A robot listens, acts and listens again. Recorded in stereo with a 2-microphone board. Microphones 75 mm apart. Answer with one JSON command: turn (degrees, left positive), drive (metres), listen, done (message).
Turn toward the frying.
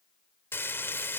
{"turn": 30}
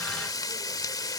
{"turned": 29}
{"turn": 120}
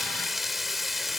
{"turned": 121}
{"done": "Found it: frying, straight ahead."}